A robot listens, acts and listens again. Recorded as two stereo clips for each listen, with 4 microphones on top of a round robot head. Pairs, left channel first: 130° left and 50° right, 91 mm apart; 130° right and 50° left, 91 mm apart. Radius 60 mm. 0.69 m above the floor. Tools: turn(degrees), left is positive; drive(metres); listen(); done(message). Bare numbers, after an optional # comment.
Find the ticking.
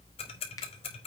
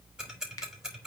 # The ticking: 135° left.
turn(135)
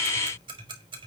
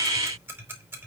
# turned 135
# The ticking is now 20° right.
turn(-20)
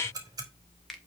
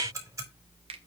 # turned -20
done("Facing the ticking, 2 to 4 m away.")